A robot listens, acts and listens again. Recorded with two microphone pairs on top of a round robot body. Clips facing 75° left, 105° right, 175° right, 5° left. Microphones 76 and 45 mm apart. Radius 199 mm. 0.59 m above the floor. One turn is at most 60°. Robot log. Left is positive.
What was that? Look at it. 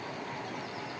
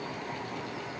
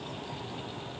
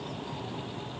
cmd idle
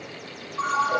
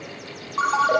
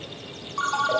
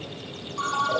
note: The ringtone: 115° right.
cmd yaw -60
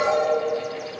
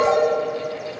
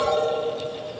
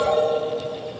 note: The ringtone is now 55° right.
cmd yaw -55
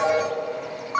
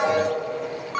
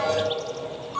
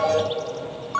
end: Facing the ringtone, under 1 m away.